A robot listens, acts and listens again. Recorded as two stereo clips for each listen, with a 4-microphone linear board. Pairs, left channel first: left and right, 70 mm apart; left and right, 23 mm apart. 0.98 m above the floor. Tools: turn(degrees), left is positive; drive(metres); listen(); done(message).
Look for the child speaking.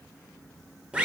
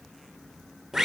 listen()
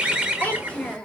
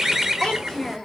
turn(degrees=30)
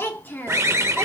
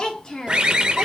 turn(degrees=30)
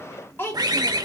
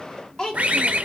turn(degrees=150)
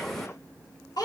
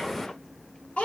turn(degrees=70)
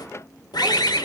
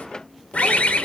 listen()
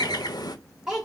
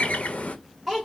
done("Found it: a child speaking, straight ahead.")